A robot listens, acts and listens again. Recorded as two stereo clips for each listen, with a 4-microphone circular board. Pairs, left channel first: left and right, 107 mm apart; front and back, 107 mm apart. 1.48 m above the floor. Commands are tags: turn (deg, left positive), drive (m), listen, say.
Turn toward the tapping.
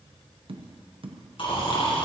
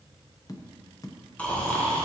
<turn deg="-55"/>
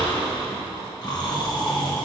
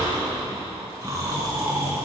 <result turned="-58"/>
<listen/>
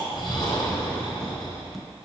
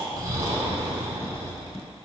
<listen/>
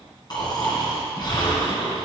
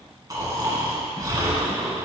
<say>Facing where the tapping came from. I can't hear it now.</say>